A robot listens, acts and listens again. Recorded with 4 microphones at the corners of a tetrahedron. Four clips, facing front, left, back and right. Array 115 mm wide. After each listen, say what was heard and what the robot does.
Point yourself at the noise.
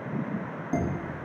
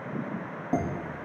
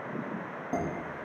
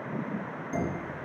The dishes clattering: 110° left. Turn 110° left.
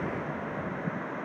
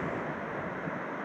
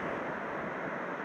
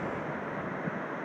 Keep listening.
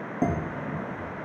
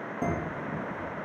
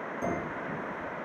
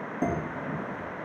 Found it: dishes clattering, straight ahead.